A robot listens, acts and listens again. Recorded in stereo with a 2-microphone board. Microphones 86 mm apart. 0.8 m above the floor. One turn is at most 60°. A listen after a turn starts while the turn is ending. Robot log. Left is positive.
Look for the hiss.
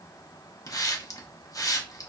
note: The hiss: about 40° left or 140° left.
cmd yaw +40
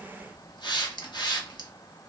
note: So it is at 85° left.
cmd yaw +60
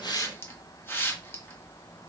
note: The hiss is now 30° left.
cmd yaw +30
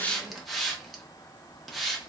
end: Facing the hiss.